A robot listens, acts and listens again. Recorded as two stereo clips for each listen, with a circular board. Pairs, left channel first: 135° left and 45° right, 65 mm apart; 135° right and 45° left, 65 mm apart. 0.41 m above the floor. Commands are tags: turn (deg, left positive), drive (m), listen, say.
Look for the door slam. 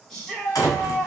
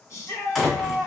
<turn deg="135"/>
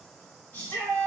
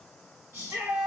<say>Facing where the door slam came from. I can't hear it now.</say>